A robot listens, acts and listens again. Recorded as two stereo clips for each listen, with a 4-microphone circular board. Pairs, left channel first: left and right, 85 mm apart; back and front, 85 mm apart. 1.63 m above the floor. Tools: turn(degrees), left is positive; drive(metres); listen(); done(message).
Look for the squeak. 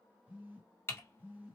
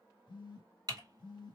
listen()
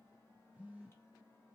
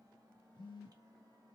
listen()
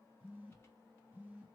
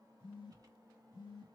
done("I can't make out a squeak, only a phone buzzing and typing on a keyboard.")